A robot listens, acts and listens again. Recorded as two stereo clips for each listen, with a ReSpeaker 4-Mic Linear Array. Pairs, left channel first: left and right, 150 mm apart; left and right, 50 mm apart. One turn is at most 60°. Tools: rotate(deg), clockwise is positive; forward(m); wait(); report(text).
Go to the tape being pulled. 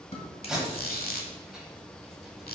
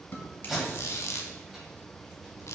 rotate(30)
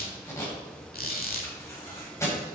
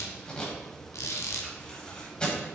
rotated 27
rotate(-20)
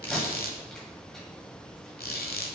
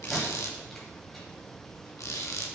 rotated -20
wait()
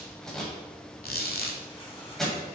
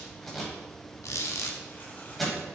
forward(1.0)
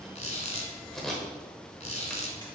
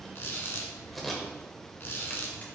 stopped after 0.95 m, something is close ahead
report("Arrived at the tape being pulled, straight ahead.")